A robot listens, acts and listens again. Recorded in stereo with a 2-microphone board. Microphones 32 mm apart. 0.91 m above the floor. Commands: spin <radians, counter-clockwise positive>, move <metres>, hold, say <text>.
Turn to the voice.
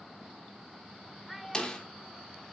spin -0.52
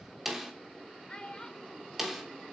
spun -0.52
spin 0.44
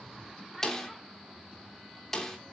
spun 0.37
hold
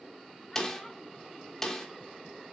hold
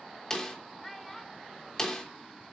say Found it: a child speaking, straight ahead, 2 to 4 m away.